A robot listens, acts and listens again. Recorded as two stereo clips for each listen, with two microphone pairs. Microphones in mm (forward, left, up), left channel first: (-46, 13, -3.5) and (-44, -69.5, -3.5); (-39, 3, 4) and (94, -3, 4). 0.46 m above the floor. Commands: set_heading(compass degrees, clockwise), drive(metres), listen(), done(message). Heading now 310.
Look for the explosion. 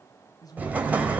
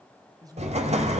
set_heading(330)
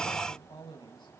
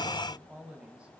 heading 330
done("Facing where the explosion came from. I can't hear it now.")